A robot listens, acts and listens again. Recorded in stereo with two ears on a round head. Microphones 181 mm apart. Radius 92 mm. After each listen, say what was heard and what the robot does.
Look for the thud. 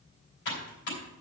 Keep listening.
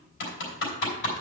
Keep listening.
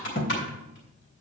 The thud: about 45° left or 135° left. Turn 45° left.
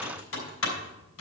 Keep listening.
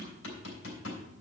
I heard a thud, but can't make it out now. It was about straight ahead or 90° left.